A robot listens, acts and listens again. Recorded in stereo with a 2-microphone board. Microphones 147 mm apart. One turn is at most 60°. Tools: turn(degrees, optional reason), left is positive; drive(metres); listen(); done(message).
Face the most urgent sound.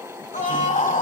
turn(degrees=60, reason="The scream: about 60° left or 120° left.")
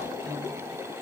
listen()
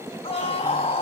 turn(degrees=50, reason="So it is at 50° left.")
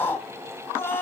turn(degrees=15, reason="The scream is now 15° left.")
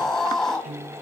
done("Facing the scream, 2 to 4 m away.")